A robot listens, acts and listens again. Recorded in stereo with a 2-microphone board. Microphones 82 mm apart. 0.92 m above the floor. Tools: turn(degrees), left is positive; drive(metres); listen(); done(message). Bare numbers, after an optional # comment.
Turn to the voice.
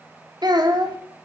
# The child speaking: about 60° right or 120° right.
turn(-60)
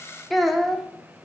done("Found it: a child speaking, straight ahead, 1 to 2 m away.")